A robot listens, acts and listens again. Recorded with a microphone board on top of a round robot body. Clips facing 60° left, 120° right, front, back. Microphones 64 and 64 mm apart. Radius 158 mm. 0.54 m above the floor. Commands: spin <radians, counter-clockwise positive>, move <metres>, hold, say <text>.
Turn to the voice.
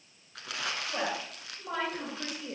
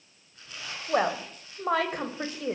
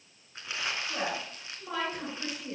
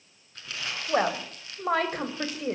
spin -2.53
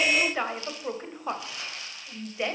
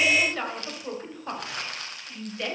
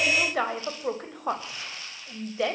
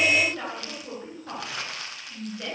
spin -0.17
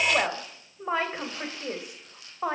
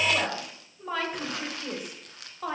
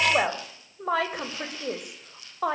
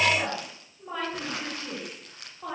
say Found it: a woman speaking, straight ahead, 2 to 4 m away.